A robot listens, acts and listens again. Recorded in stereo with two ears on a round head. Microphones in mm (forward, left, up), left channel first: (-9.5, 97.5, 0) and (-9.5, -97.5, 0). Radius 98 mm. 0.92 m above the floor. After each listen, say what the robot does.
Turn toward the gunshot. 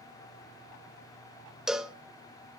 Keep listening.
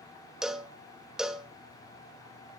Keep listening.
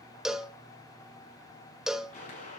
Turn 30° left.
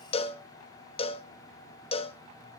Keep listening.
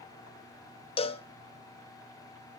I heard a gunshot, but can't make it out now. It was about straight ahead or 120° left.